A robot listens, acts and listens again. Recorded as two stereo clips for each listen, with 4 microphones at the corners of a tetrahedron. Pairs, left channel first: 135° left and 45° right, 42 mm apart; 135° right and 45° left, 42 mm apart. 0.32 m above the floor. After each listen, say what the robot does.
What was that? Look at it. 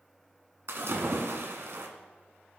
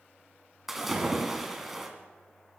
Turn 35° right.
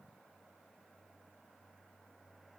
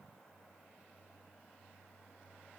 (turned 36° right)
I heard a splash from this way, but can't make it out now.